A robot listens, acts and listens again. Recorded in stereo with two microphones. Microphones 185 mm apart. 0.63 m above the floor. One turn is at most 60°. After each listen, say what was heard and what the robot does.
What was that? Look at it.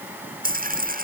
The dropped coin: about 50° right or 130° right. Turn 50° right.
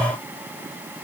Keep listening.
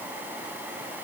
I heard a dropped coin, but can't make it out now. It was about straight ahead or 80° right.